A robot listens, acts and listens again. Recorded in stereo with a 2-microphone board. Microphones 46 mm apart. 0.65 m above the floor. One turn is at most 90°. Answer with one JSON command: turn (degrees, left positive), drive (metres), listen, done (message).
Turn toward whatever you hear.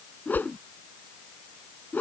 {"turn": 40}
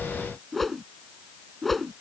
{"done": "Found it: a whoosh, straight ahead."}